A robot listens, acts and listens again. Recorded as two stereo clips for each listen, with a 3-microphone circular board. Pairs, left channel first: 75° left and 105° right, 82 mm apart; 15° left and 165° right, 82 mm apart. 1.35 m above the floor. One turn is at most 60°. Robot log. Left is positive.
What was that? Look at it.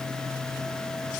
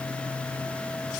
cmd idle
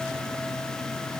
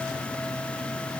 cmd idle
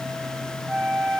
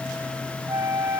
note: The flute: 165° left.
cmd yaw +60
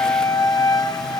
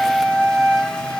note: The flute is now 100° left.
cmd yaw +60
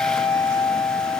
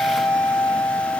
note: The flute is now 60° left.
cmd yaw +60
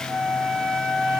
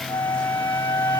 note: The flute is now 10° right.
cmd yaw -10
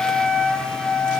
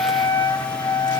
end: Found it: a flute, straight ahead, 2 to 4 m away.